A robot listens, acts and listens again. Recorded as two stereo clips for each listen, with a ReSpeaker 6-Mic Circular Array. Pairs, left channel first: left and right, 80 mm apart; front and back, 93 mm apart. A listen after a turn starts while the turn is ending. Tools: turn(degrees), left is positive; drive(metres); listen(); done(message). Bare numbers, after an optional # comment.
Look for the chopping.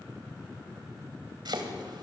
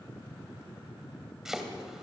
# The chopping: 95° right.
turn(-95)
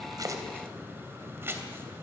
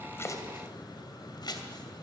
# The chopping is now 30° right.
turn(-30)
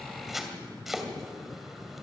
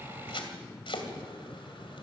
done("Found it: chopping, straight ahead, 2 to 4 m away.")